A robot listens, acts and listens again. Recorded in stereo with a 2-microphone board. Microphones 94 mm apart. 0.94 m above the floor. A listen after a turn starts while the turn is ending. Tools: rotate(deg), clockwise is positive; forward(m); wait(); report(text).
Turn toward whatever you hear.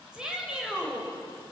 rotate(30)
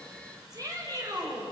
rotate(140)
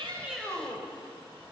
rotate(-25)
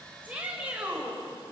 rotate(15)
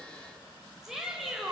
report("Found it: a shout, straight ahead, 2 to 4 m away.")